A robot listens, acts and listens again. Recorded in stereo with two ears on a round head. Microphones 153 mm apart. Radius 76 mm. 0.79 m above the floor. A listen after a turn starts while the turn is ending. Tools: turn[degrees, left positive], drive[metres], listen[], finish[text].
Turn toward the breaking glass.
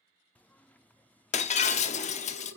Thought: The breaking glass: about 40° left or 140° left.
Action: turn[40]
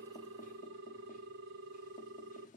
Action: listen[]
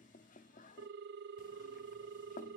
Action: finish[I heard breaking glass, but can't make it out now. It was about straight ahead or 100° left.]